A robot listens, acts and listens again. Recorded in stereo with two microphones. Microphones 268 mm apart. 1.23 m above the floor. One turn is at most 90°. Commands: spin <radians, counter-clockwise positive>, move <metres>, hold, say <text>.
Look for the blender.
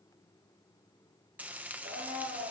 spin -0.96
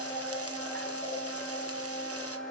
say Facing the blender, over 4 m away.